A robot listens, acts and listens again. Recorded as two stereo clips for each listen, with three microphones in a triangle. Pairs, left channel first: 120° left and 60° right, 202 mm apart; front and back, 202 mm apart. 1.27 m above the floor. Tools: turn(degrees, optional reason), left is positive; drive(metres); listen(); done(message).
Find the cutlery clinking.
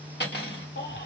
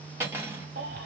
turn(degrees=100, reason="The cutlery clinking: 100° left.")
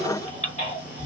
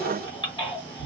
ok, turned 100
listen()
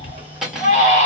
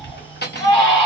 turn(degrees=25, reason="The cutlery clinking is now 25° left.")
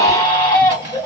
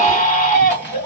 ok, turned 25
listen()
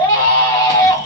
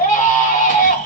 listen()
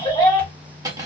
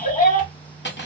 turn(degrees=10, reason="The cutlery clinking is now 10° left.")
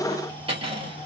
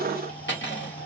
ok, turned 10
done("Facing the cutlery clinking.")